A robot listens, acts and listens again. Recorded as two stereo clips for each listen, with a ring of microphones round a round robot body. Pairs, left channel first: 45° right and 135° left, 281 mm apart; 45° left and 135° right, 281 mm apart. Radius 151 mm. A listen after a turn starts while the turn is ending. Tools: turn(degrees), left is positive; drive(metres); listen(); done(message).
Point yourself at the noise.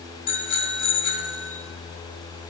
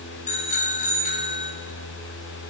turn(degrees=-20)
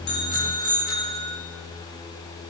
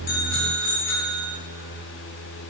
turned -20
done("Found it: a bicycle bell, straight ahead.")